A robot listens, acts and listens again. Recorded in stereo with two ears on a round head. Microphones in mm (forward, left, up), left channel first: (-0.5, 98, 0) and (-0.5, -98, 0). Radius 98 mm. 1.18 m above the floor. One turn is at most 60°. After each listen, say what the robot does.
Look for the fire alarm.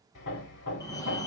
Turn 15° left.
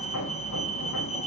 Turn 60° left.
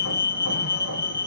Turn 60° left.
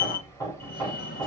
Turn 50° left.
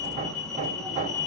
Facing the fire alarm.